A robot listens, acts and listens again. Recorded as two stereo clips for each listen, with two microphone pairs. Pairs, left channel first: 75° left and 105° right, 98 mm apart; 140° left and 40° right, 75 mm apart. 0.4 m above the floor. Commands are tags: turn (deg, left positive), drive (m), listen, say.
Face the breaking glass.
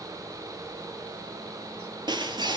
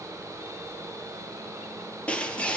<turn deg="-150"/>
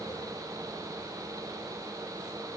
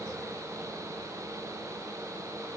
<say>I heard breaking glass from this way, but can't make it out now.</say>